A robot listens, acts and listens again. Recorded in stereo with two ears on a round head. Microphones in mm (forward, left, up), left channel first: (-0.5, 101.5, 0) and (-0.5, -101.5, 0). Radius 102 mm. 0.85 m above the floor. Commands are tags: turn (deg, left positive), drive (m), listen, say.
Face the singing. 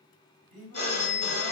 <turn deg="30"/>
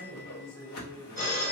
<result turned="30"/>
<turn deg="145"/>
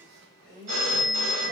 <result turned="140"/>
<say>Found it: singing, straight ahead.</say>